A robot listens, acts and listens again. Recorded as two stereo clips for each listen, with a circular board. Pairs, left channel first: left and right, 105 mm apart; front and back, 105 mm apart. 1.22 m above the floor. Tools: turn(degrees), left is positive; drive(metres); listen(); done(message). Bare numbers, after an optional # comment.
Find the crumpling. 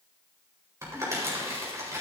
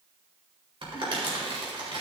# The crumpling: 150° right.
turn(-150)
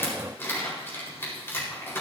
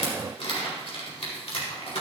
# The crumpling is now 25° left.
turn(25)
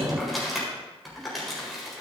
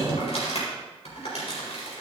done("Facing the crumpling.")